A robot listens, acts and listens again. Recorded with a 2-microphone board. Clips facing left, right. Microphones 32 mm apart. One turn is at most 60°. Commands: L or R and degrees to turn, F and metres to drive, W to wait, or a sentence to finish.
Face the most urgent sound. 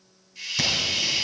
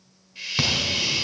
R35
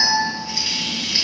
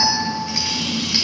R60
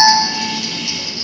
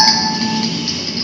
R40
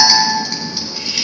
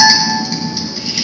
Found it: an alarm, straight ahead.